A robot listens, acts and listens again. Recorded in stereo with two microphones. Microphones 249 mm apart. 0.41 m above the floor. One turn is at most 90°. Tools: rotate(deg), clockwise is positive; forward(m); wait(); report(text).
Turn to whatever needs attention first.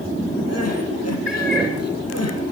rotate(-90)
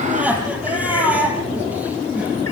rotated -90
report("Facing the crying.")